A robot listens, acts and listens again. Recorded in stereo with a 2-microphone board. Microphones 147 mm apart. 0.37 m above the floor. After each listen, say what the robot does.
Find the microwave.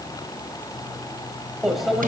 Turn 30° left.
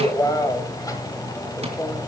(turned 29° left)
Turn 150° left.
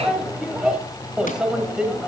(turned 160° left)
Facing the microwave, 1 to 2 m away.